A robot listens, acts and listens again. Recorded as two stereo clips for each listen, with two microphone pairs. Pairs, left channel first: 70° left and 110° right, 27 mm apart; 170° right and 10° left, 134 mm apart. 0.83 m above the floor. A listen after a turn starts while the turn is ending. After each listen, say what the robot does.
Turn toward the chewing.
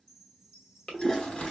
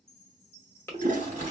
Turn 120° left.
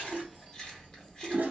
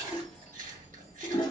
Turn 10° left.
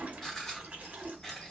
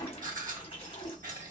Facing the chewing.